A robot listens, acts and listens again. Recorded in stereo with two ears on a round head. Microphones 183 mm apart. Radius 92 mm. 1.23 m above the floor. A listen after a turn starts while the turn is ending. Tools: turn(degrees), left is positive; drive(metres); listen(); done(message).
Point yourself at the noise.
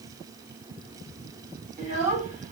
turn(degrees=-40)
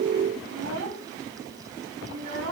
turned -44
turn(degrees=-100)
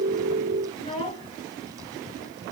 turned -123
turn(degrees=25)
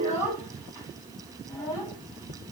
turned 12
turn(degrees=15)
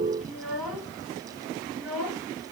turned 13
done("Found it: a child speaking, straight ahead.")